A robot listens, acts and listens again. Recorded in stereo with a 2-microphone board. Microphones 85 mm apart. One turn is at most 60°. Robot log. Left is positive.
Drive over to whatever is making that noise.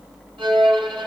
cmd yaw -60
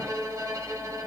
note: So it is at 40° right.
cmd yaw -40
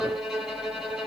cmd fwd 1.0
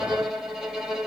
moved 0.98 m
cmd fwd 1.0
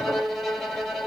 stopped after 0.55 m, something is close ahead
end: Arrived at the violin, straight ahead.